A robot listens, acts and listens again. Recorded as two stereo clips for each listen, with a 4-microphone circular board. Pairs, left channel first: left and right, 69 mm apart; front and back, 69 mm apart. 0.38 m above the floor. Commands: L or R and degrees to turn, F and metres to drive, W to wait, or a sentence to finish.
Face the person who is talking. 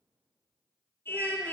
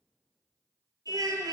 R145
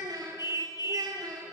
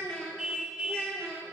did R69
R80
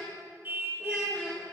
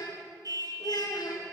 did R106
L25
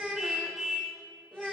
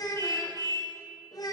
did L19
Facing the child speaking, over 4 m away.